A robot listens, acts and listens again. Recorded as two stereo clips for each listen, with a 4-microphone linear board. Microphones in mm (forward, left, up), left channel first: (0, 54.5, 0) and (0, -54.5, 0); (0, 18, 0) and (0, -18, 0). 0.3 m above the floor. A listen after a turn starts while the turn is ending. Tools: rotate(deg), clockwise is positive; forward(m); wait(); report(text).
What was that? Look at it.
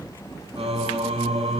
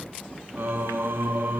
rotate(65)
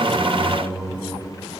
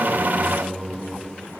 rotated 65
report("Facing the singing.")